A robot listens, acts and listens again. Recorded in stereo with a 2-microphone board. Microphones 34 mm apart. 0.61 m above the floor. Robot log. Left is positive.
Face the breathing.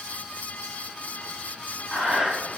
note: The breathing: about 30° right or 150° right.
cmd yaw -30
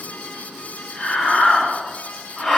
end: Found it: breathing, straight ahead.